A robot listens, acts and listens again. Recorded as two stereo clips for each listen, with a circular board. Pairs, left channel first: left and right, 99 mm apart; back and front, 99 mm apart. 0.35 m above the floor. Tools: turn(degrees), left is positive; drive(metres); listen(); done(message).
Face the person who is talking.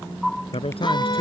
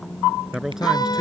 turn(degrees=85)
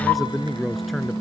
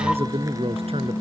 done("Facing the man speaking.")